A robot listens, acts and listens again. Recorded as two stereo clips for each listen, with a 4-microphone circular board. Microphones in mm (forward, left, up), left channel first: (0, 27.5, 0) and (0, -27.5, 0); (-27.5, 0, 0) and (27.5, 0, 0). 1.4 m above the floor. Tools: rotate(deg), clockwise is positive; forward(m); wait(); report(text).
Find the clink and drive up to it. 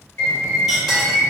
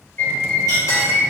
rotate(-180)
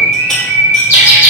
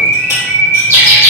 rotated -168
rotate(-15)
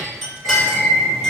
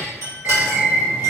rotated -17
forward(1.0)
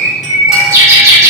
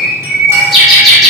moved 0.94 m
wait()
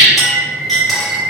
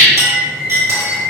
forward(1.0)
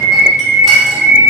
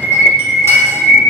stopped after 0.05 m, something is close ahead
wait()
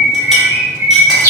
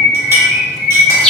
wait()
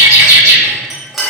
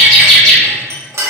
report("I am next to the clink.")